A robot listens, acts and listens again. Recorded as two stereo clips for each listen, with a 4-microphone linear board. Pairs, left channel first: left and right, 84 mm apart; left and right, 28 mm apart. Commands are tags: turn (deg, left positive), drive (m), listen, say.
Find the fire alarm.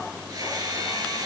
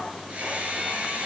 <listen/>
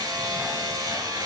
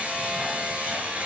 <listen/>
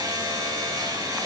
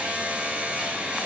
<say>I can't make out a fire alarm to turn to.</say>